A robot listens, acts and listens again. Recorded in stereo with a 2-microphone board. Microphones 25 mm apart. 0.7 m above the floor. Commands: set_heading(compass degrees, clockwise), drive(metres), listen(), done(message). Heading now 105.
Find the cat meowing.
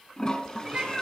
set_heading(135)
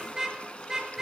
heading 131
listen()
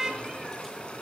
set_heading(116)
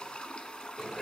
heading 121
done("Facing the cat meowing.")